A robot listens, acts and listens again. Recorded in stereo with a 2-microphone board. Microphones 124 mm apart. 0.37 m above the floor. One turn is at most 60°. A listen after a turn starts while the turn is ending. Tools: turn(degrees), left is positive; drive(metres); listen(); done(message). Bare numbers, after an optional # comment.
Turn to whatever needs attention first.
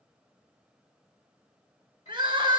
# The crying: about 40° right or 140° right.
turn(-40)
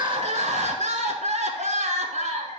# So it is at 100° right.
turn(-60)
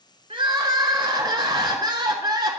# The crying is now 35° right.
turn(-35)
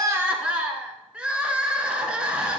# The crying is now 10° right.
turn(-10)
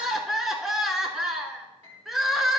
done("Facing the crying.")